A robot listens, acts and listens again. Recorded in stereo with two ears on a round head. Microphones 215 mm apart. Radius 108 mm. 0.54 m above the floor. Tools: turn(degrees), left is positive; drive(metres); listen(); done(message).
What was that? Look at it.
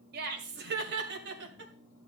turn(degrees=-50)
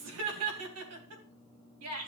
turn(degrees=-65)
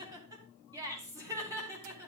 turn(degrees=-15)
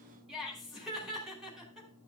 done("Found it: laughter, straight ahead.")